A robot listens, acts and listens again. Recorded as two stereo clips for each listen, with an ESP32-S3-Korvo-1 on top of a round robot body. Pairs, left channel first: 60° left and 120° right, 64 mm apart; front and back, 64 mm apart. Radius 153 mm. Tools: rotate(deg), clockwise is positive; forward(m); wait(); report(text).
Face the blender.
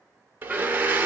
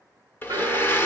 rotate(55)
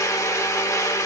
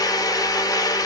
rotate(-20)
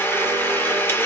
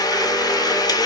report("Facing the blender, under 1 m away.")